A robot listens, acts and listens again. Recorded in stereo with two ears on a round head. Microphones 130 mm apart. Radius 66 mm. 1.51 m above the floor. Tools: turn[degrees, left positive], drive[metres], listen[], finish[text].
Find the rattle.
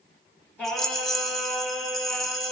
Action: turn[30]
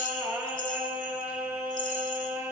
Thought: So it is at 145° left.
Action: turn[145]
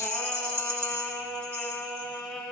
Thought: The rattle is now 15° right.
Action: turn[-15]
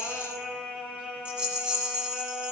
Action: finish[Found it: a rattle, straight ahead.]